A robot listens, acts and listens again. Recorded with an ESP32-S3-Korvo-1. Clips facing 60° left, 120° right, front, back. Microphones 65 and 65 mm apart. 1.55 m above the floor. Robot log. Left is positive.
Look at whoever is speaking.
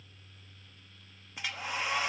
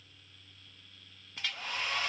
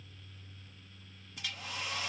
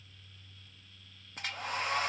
cmd idle
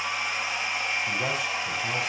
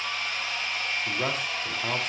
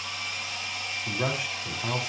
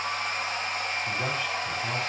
note: The man speaking: 75° right.
cmd yaw -75
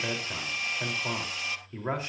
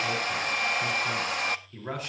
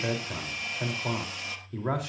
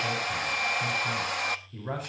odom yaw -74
end: Found it: a man speaking, straight ahead, 2 to 4 m away.